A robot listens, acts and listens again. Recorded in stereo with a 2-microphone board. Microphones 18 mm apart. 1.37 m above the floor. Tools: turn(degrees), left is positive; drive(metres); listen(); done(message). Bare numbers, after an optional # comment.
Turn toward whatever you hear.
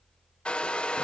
# The hair dryer: about 70° left or 110° left.
turn(70)
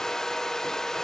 # So it is at 35° left.
turn(35)
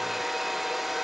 done("Found it: a hair dryer, straight ahead.")